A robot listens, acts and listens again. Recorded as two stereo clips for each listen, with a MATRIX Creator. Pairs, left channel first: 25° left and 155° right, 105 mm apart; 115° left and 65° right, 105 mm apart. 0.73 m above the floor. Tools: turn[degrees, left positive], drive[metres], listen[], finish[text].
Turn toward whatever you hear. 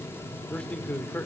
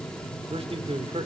Thought: The man speaking: 50° right.
Action: turn[-50]
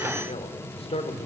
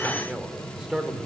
Thought: The man speaking is now 15° left.
Action: turn[15]
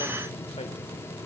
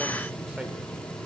Action: listen[]
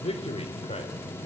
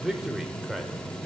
Thought: The man speaking is now 25° left.
Action: turn[25]
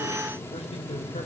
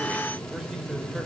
Thought: The man speaking is now 15° left.
Action: turn[15]
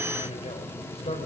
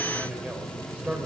Thought: The man speaking is now 10° left.
Action: turn[10]
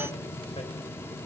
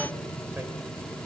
Action: listen[]
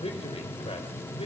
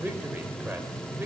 Action: finish[Facing the man speaking, 2 to 4 m away.]